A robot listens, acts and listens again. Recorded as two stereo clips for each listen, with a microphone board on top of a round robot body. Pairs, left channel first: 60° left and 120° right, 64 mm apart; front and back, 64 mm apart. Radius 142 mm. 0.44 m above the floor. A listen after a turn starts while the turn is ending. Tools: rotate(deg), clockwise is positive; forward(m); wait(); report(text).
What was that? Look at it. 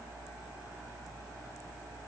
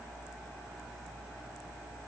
wait()
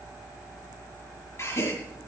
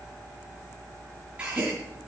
rotate(-110)
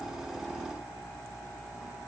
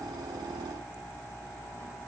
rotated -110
report("I heard a gasp from this way, but can't make it out now.")